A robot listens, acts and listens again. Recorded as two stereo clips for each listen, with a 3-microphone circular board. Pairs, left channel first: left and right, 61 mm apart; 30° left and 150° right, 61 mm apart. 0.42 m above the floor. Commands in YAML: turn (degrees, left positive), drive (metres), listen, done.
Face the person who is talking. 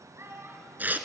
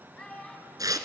turn: -45
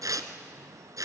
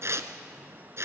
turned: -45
listen: true
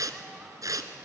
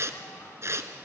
listen: true
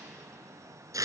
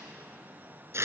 done: "I heard a child speaking from this way, but can't make it out now."